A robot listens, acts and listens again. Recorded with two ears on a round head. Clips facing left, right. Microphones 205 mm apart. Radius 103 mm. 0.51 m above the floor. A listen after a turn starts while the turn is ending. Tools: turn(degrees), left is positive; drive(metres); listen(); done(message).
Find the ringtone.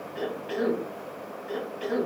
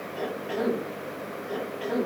listen()
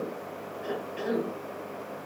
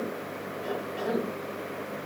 listen()
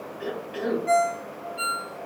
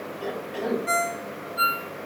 turn(degrees=-25)
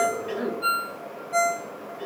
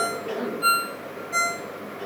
turn(degrees=-130)
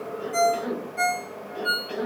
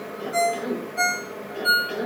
done("Found it: a ringtone, straight ahead.")